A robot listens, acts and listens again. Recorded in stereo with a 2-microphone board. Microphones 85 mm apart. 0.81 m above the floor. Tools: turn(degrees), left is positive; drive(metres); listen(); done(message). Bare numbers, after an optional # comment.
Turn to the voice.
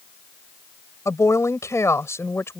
# The woman speaking: about 30° left or 150° left.
turn(30)
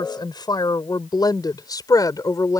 # So it is at 135° left.
turn(135)
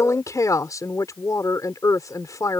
# The woman speaking is now 40° left.
turn(40)
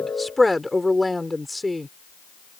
done("Facing the woman speaking.")